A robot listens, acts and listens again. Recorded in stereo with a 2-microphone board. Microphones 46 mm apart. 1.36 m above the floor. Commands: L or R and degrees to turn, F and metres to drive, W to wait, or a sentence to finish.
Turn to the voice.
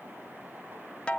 W
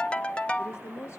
L75
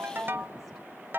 W
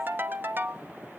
W
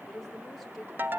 Found it: a woman speaking, straight ahead.